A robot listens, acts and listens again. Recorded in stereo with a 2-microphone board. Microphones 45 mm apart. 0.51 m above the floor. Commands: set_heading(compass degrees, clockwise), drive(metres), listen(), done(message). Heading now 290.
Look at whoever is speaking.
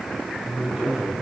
set_heading(320)
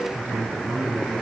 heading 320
set_heading(95)
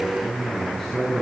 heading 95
done("Facing the man speaking.")